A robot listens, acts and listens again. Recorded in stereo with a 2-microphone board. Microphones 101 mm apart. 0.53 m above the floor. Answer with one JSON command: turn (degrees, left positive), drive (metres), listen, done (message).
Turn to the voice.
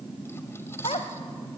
{"turn": 75}
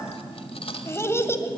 {"turn": 30}
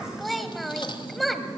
{"done": "Facing the child speaking."}